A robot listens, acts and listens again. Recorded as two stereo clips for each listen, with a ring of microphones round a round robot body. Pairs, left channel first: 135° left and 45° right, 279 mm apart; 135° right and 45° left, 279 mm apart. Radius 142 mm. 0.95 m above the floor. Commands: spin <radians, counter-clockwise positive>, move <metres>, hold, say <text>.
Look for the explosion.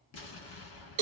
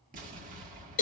spin 1.83
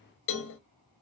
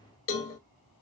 say I heard an explosion from this way, but can't make it out now.